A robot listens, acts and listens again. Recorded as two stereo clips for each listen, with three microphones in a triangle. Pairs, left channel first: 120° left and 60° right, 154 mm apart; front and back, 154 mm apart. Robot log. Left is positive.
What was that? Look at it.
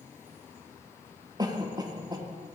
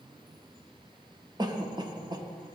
note: The cough: 120° right.
cmd yaw -120
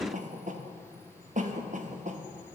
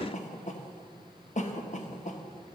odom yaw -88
note: The cough is now 30° right.
cmd yaw -30
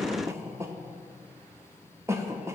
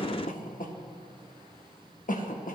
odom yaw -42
note: The cough is now 10° left.
cmd yaw +10
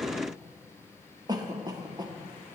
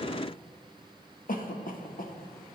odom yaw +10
end: Facing the cough.